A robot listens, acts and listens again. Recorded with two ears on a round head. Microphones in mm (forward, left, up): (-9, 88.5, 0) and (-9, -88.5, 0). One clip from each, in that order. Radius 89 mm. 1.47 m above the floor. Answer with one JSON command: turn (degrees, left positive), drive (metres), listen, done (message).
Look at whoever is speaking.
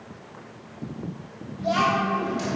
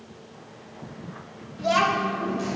{"turn": -45}
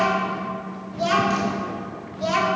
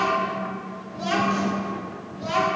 {"turn": 40}
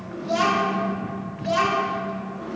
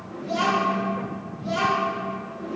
{"turn": 30}
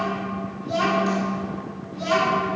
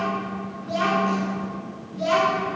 {"done": "Facing the child speaking, 1 to 2 m away."}